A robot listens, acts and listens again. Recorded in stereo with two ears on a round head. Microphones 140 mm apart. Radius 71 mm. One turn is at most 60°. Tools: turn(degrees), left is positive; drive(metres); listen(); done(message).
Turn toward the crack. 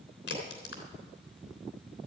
turn(degrees=60)
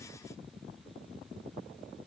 turn(degrees=30)
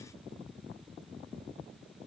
done("Facing where the crack came from. I can't hear it now.")